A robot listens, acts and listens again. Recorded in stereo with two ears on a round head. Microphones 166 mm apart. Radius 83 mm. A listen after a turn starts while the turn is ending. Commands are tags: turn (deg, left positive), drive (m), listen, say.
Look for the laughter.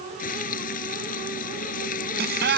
<turn deg="-60"/>
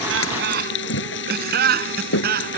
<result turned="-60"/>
<turn deg="-55"/>
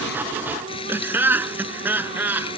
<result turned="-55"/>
<turn deg="-10"/>
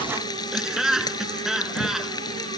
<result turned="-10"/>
<say>Found it: laughter, straight ahead.</say>